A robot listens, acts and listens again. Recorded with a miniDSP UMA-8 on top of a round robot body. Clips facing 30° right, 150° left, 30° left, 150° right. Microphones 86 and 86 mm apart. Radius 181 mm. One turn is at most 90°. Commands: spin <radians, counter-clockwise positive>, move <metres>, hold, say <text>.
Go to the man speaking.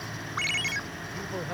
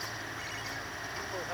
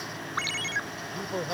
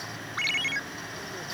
spin 1.05
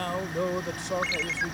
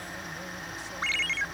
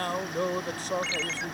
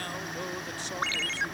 spin -0.26
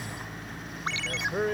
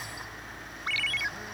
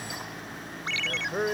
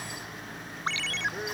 move 1.0
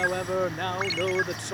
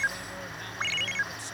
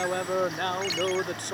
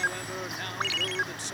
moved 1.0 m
move 1.0
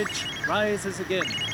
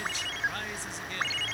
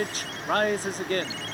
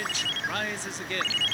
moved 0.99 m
spin -0.17
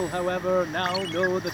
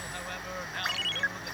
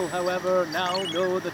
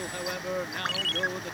move 1.0
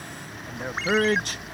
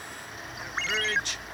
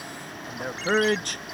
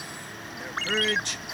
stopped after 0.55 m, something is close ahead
say I am next to the man speaking.